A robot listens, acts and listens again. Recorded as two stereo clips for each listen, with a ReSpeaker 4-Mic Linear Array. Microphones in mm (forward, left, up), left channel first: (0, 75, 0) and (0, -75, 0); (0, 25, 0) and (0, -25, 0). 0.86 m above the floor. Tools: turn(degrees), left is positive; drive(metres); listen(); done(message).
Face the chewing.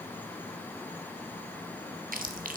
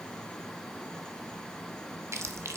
turn(degrees=-60)
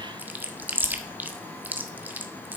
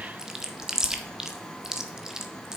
turn(degrees=-10)
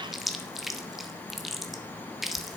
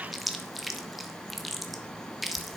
done("Found it: chewing, straight ahead, 1 to 2 m away.")